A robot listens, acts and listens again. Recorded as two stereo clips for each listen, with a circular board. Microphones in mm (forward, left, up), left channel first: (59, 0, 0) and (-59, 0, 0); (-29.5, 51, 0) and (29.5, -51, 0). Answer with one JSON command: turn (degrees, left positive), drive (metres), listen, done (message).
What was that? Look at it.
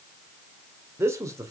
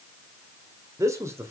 {"turn": -125}
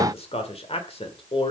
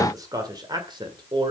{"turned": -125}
{"turn": -25}
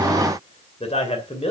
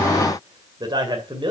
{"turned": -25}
{"turn": -20}
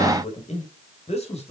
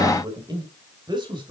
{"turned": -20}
{"turn": -15}
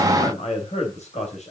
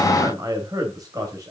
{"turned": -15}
{"done": "Found it: a man speaking, straight ahead."}